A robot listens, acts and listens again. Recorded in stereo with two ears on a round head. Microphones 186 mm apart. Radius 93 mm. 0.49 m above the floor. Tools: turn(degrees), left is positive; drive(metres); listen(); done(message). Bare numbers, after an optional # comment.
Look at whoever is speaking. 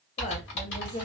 # The woman speaking: about 30° left or 150° left.
turn(30)
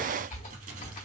listen()
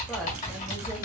listen()
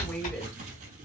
done("Found it: a woman speaking, straight ahead, 1 to 2 m away.")